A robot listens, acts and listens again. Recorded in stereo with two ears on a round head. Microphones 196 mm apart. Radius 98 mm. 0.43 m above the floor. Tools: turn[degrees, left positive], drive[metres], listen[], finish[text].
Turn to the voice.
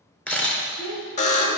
Action: turn[90]
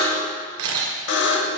Action: listen[]
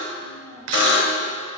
Action: listen[]
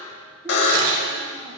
Action: finish[Facing where the child speaking came from. I can't hear it now.]